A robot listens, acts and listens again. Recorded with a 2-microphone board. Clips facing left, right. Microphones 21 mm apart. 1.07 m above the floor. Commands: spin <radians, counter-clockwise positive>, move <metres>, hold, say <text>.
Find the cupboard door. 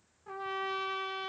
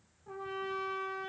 hold
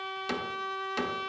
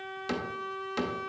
spin 0.52
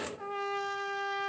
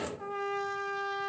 spin -0.61
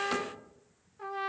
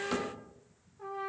hold
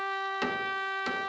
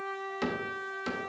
spin 0.26
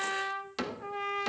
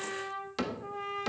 say Found it: a cupboard door, straight ahead, under 1 m away.